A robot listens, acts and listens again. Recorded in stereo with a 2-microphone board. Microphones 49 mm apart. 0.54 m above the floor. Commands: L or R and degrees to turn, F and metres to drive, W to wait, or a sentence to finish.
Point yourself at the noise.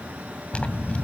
L25
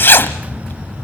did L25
L130
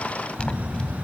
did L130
L25
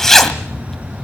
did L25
L10
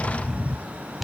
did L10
Found it: a zipper, straight ahead, 1 to 2 m away.